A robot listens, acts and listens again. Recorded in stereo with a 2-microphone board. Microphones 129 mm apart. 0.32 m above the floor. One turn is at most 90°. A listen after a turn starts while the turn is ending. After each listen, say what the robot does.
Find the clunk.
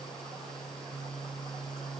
Keep listening.
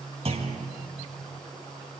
Turn 50° right.
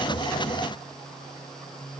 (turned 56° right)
Keep listening.
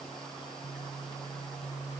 I heard a clunk, but can't make it out now. It was about 5° left or 75° right.